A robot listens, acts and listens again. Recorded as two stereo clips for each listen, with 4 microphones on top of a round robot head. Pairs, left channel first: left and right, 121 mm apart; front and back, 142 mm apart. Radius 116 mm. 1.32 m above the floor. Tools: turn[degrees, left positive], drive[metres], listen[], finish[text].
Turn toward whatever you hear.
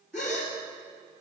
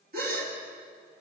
Thought: The gasp: 175° left.
Action: turn[175]
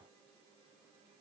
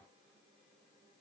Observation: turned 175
Action: finish[I heard a gasp from this way, but can't make it out now.]